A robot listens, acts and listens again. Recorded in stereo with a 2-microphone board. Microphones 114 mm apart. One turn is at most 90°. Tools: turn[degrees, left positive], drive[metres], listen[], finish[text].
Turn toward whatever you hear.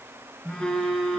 Action: turn[30]
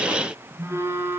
Thought: So it is at 20° right.
Action: turn[-20]
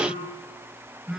Action: finish[Found it: a phone buzzing, straight ahead.]